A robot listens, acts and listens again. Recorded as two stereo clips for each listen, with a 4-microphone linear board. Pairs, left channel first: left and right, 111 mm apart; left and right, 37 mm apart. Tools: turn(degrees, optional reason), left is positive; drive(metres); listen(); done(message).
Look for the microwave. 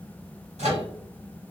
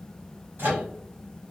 turn(degrees=-90)
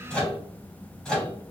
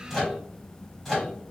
done("Found it: a microwave, straight ahead, 1 to 2 m away.")